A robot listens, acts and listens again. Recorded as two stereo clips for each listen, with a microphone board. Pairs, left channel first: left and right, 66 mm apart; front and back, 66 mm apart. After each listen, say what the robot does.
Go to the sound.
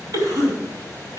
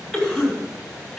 Turn 95° right.
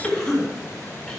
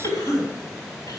Drive 1.0 m forward.
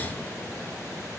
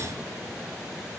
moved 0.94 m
Keep listening.
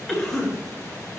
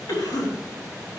Drive 1.0 m forward.
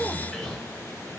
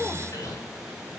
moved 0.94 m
Drive 1.0 m forward.
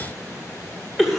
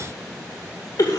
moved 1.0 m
Drive 1.0 m forward.
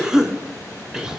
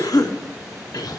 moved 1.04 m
Turn 10° right.
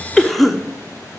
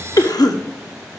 Drive 1.0 m forward.
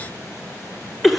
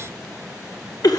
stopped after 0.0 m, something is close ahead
Arrived at the cough, straight ahead.